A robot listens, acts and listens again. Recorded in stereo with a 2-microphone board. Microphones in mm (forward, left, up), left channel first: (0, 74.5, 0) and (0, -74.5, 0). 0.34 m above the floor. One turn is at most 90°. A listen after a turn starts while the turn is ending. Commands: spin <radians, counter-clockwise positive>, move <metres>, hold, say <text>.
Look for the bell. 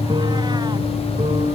hold
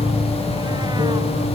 hold
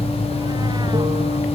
say I can't make out a bell to turn to.